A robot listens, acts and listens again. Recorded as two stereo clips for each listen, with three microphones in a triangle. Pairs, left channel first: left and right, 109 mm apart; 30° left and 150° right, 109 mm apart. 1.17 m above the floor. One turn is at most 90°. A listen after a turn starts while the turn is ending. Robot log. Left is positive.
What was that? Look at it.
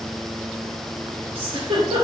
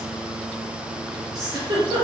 note: The giggle: 105° right.
cmd yaw -90
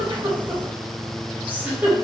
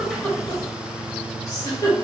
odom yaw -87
note: The giggle is now 20° right.
cmd yaw -20
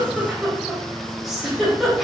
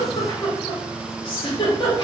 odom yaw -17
end: Found it: a giggle, straight ahead.